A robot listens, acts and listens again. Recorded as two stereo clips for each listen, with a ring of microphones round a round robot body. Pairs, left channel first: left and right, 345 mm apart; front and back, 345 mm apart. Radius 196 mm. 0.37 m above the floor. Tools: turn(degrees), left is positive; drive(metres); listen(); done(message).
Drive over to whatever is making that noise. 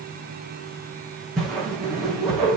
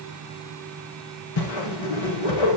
drive(metres=1.0)
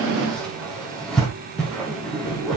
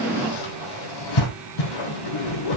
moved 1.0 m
drive(metres=1.0)
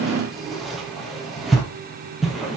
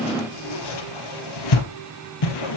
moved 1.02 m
drive(metres=1.0)
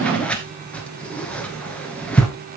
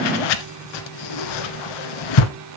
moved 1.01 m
drive(metres=1.0)
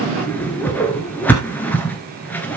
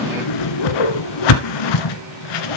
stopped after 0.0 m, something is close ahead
done("I am next to the whoosh.")